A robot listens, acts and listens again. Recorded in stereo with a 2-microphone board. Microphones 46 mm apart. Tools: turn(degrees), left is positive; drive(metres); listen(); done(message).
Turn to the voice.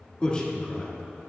turn(degrees=25)
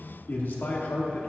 turn(degrees=130)
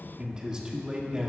turn(degrees=-20)
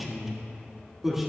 done("Facing the man speaking, 1 to 2 m away.")